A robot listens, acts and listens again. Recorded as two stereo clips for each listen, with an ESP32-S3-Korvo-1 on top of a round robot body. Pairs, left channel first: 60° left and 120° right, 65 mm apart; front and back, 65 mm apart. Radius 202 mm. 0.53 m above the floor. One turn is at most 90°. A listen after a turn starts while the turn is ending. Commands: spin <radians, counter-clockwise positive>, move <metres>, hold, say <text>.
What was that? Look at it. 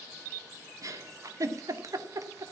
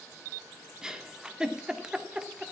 spin -1.57
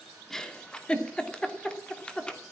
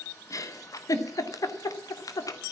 spin -0.26
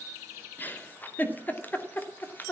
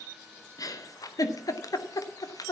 say Facing the giggle, 2 to 4 m away.